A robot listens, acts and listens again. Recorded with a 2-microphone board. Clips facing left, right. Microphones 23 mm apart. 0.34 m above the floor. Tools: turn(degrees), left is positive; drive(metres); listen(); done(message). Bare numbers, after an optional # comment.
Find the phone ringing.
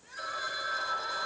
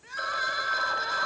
# The phone ringing: about 35° right or 145° right.
turn(-35)
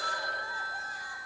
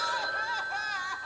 done("Facing the phone ringing, 1 to 2 m away.")